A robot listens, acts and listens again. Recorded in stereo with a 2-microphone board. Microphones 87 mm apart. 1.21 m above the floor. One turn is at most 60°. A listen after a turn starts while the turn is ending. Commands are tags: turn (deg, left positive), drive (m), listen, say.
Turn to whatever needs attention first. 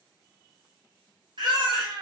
<turn deg="-60"/>
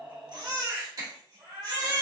<turn deg="-45"/>
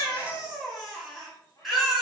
<say>Facing the baby crying, 1 to 2 m away.</say>